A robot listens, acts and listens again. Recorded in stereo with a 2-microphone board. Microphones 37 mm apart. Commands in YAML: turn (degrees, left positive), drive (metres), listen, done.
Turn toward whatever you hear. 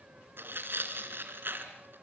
turn: -65
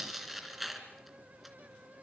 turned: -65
done: "Facing the tearing paper."